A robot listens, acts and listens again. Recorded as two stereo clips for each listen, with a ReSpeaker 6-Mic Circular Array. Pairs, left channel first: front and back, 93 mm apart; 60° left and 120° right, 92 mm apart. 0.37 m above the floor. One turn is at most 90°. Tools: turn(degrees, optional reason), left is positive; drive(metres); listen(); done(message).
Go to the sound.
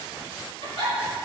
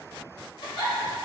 turn(degrees=10, reason="The giggle: 10° left.")
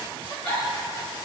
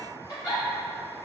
drive(metres=1.0)
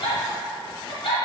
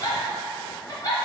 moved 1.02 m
turn(degrees=10, reason="The giggle is now 10° left.")
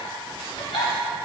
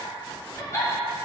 drive(metres=1.0)
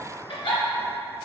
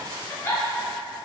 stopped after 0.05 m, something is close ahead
done("I am next to the giggle.")